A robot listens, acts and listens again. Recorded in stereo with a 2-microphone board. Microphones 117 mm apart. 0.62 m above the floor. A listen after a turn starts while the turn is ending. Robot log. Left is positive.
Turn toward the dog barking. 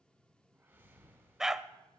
cmd yaw -30
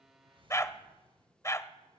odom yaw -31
note: So it is at 25° left.
cmd yaw +25
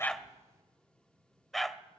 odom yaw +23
end: Found it: a dog barking, straight ahead, under 1 m away.